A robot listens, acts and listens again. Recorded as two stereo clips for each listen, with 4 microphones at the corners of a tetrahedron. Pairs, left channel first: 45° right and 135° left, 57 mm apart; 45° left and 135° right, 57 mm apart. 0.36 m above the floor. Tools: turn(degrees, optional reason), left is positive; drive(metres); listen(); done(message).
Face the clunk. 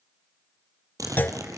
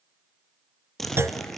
turn(degrees=-100, reason="The clunk: 100° right.")
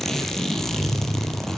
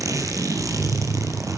done("Facing where the clunk came from. I can't hear it now.")